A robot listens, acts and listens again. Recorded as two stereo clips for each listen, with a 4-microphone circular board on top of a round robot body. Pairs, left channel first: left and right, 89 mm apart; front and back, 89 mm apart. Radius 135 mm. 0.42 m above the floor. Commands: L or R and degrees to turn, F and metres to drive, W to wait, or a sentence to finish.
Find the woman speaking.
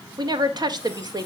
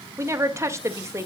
R125
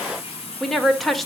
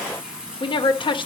Found it: a woman speaking, straight ahead, 1 to 2 m away.